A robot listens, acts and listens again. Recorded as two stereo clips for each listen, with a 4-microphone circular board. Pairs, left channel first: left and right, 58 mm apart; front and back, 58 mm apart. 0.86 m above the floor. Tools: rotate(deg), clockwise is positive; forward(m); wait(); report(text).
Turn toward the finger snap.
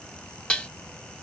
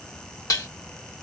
wait()
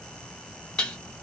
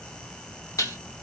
wait()
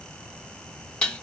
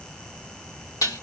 report("I can't make out a finger snap to turn to.")